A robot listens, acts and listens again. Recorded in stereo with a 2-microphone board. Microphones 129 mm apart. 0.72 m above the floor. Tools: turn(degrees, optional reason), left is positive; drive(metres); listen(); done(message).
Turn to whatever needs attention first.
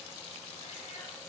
listen()
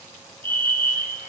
turn(degrees=-40, reason="The fire alarm: about 40° right or 140° right.")
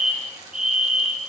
done("Facing the fire alarm.")